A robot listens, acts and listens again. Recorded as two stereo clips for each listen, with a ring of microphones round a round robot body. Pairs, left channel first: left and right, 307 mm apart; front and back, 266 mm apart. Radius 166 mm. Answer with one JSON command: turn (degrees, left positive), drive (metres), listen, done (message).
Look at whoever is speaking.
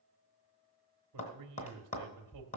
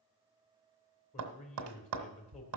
{"turn": -65}
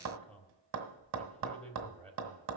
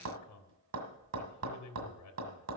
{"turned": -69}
{"done": "Facing the man speaking."}